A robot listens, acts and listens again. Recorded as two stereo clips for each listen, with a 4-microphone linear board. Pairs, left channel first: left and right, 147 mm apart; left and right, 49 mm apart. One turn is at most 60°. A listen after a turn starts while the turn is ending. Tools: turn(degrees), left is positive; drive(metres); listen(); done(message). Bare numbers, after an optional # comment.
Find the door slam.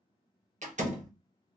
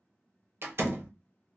# The door slam: about 55° right or 125° right.
turn(-55)
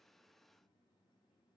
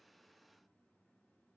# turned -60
listen()
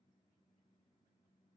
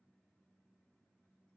done("I heard a door slam, but can't make it out now. It was about 5° left or 65° right.")